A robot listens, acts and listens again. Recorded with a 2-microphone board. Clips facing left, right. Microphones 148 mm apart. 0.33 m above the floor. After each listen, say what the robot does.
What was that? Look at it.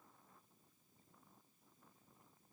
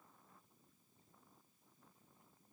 Keep listening.
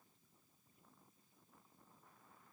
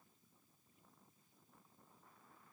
Keep listening.
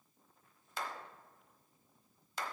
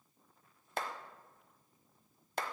Turn 55° right.
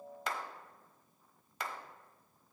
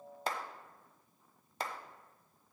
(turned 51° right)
Turn 40° right.
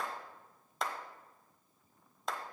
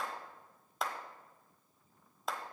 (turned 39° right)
Found it: a clap, straight ahead, 1 to 2 m away.